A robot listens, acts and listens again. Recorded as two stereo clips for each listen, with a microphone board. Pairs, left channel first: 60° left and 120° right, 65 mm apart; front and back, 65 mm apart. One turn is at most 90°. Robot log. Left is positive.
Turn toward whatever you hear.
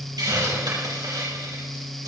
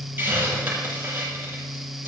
note: The hiss: 120° right.
cmd yaw -90
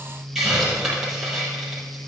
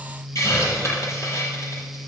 note: The hiss is now 40° right.
cmd yaw -40
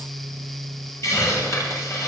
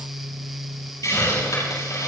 note: The hiss is now 25° left.
cmd yaw +25
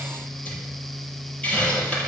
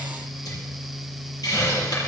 note: The hiss is now 10° right.
cmd yaw -10
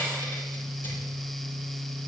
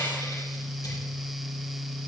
cmd idle
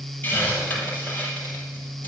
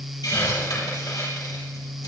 end: Facing the hiss, over 4 m away.